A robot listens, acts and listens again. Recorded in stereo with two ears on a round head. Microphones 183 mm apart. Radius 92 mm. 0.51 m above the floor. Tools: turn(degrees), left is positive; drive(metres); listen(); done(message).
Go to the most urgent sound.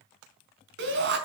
turn(degrees=-55)
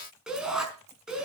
drive(metres=1.0)
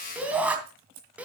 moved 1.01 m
drive(metres=1.0)
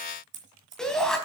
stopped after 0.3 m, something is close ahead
done("Blocked. The shout is further on, straight ahead.")